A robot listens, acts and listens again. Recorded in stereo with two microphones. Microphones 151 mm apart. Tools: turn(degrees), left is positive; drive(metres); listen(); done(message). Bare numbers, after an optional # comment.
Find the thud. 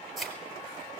turn(30)
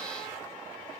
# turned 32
listen()
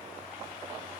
done("I heard a thud, but can't make it out now. It was about 30° right or 145° left.")